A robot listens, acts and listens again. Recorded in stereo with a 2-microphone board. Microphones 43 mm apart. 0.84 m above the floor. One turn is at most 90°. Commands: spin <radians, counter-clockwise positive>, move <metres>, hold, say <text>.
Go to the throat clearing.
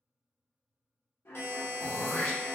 spin 1.22
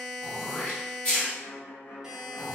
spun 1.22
spin 0.35
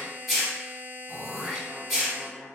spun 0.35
move 1.0
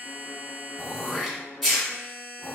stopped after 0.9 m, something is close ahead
say I am next to the throat clearing.